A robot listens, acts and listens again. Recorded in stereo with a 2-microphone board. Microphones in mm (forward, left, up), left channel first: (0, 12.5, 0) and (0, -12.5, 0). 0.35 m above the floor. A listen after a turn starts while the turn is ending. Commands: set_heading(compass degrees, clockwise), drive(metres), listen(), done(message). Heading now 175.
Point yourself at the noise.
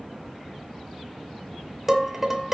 set_heading(190)
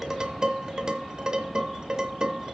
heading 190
set_heading(335)
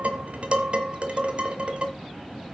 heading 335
set_heading(25)
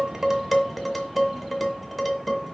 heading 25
done("Found it: dishes clattering, straight ahead, 1 to 2 m away.")